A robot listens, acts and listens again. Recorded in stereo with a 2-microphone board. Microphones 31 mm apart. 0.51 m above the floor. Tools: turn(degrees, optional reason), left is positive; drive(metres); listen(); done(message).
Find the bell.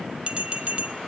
turn(degrees=-35, reason="The bell: about 35° right or 145° right.")
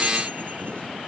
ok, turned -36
listen()
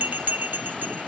turn(degrees=-110, reason="So it is at 110° right.")
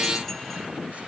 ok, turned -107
listen()
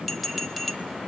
done("Found it: a bell, straight ahead, 1 to 2 m away.")